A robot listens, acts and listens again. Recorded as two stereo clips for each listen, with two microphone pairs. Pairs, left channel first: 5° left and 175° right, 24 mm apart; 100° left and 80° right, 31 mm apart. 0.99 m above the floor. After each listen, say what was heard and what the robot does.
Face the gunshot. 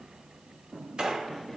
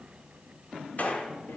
The gunshot: 140° left. Turn 140° left.
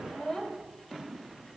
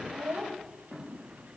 Facing where the gunshot came from. I can't hear it now.